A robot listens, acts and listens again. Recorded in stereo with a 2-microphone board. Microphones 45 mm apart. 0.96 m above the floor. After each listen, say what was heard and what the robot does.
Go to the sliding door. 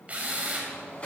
The sliding door: about 25° left or 155° left. Turn 25° left.
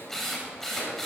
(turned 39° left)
Keep listening.
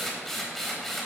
Keep listening.
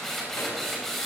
I heard a sliding door, but can't make it out now. It was about 15° right or 115° left. I did not reach it.